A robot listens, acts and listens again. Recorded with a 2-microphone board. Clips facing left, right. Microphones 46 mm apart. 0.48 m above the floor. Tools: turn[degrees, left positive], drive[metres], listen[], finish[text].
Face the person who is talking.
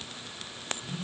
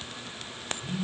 Action: listen[]
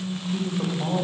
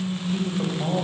Action: turn[-30]
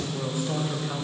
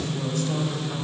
Thought: So it is at 20° left.
Action: turn[20]
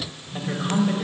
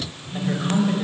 Action: finish[Found it: a woman speaking, straight ahead, 1 to 2 m away.]